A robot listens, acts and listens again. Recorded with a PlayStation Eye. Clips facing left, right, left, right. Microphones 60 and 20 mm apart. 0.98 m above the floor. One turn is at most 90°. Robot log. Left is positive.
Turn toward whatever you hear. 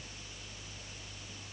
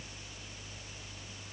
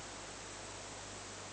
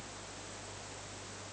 cmd idle
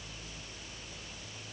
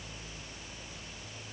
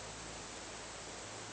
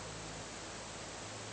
cmd idle
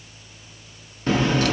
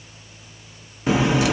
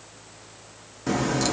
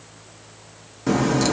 cmd yaw -30
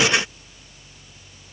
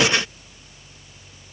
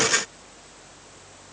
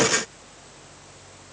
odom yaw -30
cmd idle
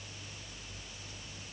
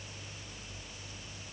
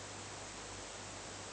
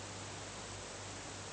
end: I heard a crack, but can't make it out now. It was about 20° left or 140° right.